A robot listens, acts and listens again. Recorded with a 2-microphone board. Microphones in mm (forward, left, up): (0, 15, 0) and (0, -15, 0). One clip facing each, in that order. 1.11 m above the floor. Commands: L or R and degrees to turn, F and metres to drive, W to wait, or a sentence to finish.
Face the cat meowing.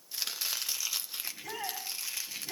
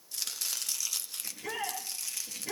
W
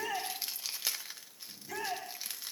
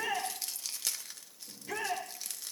W
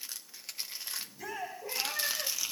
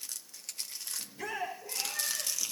L20
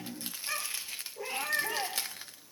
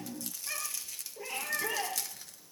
Facing the cat meowing.